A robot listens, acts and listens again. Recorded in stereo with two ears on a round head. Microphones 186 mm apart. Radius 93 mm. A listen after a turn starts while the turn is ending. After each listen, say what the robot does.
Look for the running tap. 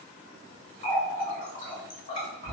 Turn 45° left.
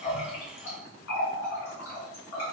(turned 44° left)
Turn 90° left.
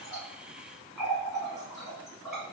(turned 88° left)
Facing the running tap.